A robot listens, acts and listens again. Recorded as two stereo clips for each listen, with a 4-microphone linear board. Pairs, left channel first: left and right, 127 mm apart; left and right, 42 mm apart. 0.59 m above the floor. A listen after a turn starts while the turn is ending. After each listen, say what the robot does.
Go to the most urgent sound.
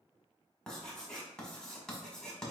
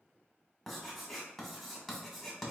Keep listening.
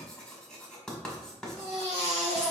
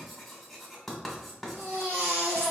Turn 55° right.
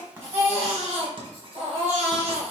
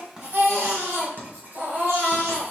Turn 65° right.
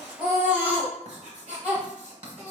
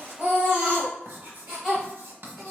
Turn 10° right.
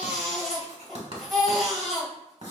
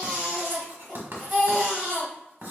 Drive 1.0 m forward.
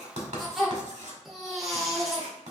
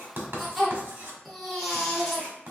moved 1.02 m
Drive 1.0 m forward.
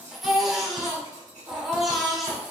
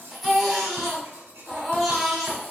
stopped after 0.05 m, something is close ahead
I am next to the baby crying.